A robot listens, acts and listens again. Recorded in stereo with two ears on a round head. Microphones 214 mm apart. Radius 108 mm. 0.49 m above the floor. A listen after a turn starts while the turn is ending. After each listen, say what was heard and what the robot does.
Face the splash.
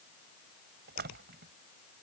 The splash: about 40° right or 140° right. Turn 40° right.
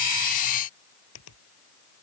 Keep listening.
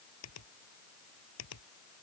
I heard a splash, but can't make it out now. It was about straight ahead or 100° right.